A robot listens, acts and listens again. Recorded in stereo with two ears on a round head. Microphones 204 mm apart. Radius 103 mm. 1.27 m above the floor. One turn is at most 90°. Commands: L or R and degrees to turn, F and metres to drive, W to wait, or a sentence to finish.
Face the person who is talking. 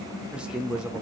R30
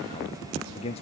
L25
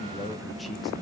Found it: a man speaking, straight ahead.